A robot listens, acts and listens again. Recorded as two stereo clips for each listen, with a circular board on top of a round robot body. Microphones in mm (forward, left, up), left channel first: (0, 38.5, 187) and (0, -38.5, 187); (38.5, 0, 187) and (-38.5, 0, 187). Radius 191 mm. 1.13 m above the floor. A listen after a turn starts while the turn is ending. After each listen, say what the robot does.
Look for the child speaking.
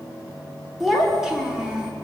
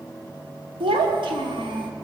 Turn 170° right.
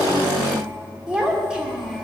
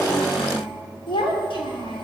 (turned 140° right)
Found it: a child speaking, straight ahead.